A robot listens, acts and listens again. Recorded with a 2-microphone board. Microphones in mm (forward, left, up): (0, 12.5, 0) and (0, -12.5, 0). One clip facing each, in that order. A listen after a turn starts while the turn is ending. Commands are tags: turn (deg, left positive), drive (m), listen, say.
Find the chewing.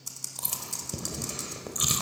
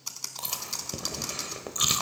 <turn deg="-20"/>
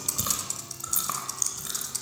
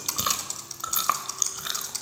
<turn deg="-140"/>
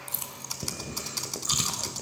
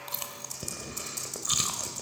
<say>Found it: chewing, straight ahead.</say>